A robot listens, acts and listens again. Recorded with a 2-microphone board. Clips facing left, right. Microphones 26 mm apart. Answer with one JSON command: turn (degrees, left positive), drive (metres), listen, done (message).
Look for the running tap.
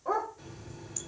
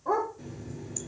{"turn": 30}
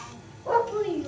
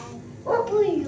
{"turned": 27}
{"turn": 120}
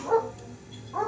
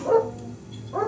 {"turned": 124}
{"done": "Facing the running tap, 1 to 2 m away."}